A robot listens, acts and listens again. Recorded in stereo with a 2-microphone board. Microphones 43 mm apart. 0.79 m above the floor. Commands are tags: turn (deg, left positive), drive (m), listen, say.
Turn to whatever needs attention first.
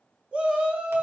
<turn deg="-25"/>
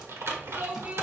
<turn deg="-125"/>
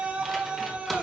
<turn deg="-35"/>
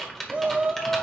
<turn deg="-30"/>
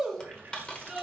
<turn deg="-15"/>
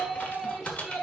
<say>Found it: a shout, straight ahead.</say>